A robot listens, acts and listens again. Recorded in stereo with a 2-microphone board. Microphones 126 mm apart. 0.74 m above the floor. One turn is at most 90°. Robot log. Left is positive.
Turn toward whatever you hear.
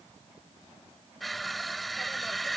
cmd yaw +30
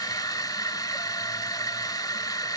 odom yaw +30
note: So it is at 150° left.
cmd yaw +90
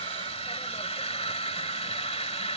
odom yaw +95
note: The crushing is now 55° left.
cmd yaw +55
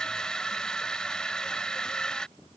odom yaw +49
end: Facing the crushing.